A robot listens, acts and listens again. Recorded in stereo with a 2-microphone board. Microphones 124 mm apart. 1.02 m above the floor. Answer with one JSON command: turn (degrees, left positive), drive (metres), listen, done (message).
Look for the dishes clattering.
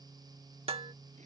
{"turn": -50}
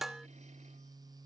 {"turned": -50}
{"done": "Facing the dishes clattering."}